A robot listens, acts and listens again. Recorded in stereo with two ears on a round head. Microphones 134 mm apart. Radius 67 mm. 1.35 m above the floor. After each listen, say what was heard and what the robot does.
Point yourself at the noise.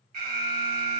The alarm: about 60° right or 120° right. Turn 60° right.
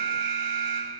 So it is at 60° right. Turn 60° right.
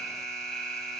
Facing the alarm, 2 to 4 m away.